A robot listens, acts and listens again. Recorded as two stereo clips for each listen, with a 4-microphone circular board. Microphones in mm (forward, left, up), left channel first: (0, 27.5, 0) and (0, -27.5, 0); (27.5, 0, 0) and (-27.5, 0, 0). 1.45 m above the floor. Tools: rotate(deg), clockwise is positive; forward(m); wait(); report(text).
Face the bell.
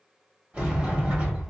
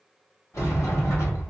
wait()
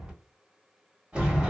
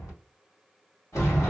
wait()
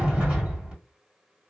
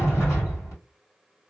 report("I can't make out a bell, only a sliding door.")